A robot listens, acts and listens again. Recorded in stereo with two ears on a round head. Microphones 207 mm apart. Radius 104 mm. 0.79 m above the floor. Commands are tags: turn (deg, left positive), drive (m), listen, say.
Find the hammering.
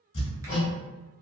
<turn deg="65"/>
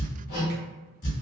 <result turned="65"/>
<turn deg="50"/>
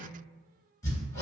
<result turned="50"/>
<turn deg="15"/>
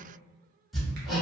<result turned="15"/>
<say>Facing the hammering.</say>